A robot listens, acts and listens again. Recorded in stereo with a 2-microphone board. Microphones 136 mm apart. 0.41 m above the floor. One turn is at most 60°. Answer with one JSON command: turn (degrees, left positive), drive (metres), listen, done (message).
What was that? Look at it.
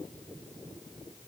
{"listen": true}
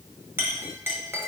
{"turn": -15}
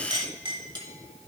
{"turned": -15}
{"turn": -60}
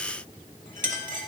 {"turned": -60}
{"turn": -60}
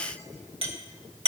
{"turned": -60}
{"turn": -45}
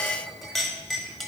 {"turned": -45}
{"done": "Found it: a clink, straight ahead, 1 to 2 m away."}